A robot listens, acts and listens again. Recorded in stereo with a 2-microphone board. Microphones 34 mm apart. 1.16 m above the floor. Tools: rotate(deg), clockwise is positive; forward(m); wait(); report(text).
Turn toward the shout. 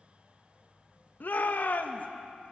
rotate(-65)
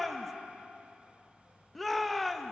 report("Found it: a shout, straight ahead, 1 to 2 m away.")